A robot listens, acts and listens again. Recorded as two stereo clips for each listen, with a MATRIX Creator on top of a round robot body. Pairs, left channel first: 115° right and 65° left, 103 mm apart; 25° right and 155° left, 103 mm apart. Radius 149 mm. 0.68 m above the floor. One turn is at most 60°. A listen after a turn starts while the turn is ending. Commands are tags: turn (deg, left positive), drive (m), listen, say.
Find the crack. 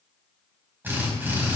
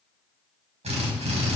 <listen/>
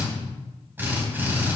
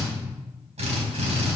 <listen/>
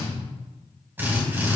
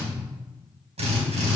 <say>I can't make out a crack to turn to.</say>